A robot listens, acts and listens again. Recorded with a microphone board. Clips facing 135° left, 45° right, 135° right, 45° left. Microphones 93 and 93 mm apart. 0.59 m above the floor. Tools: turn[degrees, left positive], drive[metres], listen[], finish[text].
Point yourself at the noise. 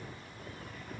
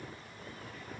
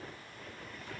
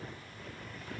Action: listen[]
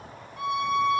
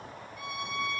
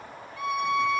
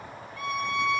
Thought: The violin: 155° left.
Action: turn[155]
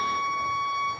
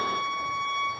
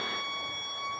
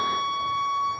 Thought: The violin is now 55° left.
Action: turn[55]
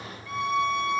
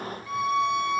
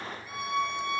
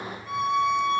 Thought: The violin is now 30° left.
Action: turn[30]
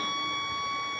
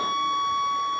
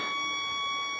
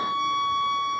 Thought: The violin is now 10° right.
Action: turn[-10]
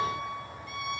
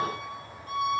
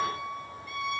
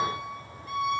Action: finish[Facing the violin, 2 to 4 m away.]